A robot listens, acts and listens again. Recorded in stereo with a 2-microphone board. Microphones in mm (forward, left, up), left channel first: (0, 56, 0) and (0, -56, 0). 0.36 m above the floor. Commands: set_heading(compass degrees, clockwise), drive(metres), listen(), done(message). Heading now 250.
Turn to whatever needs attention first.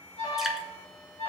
set_heading(180)
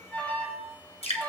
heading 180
set_heading(165)
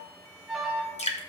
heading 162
done("Facing the alarm, 2 to 4 m away.")